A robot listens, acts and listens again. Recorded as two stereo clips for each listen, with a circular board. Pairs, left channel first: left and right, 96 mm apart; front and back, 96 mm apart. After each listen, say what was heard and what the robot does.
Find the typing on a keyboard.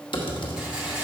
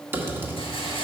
The typing on a keyboard: 115° left. Turn 115° left.
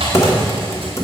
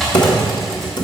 The typing on a keyboard is now 35° left. Turn 35° left.
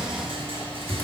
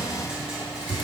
The typing on a keyboard is now 25° left. Turn 25° left.
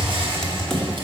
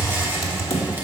The typing on a keyboard is now 10° left. Turn 10° left.
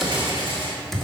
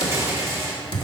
Found it: typing on a keyboard, straight ahead.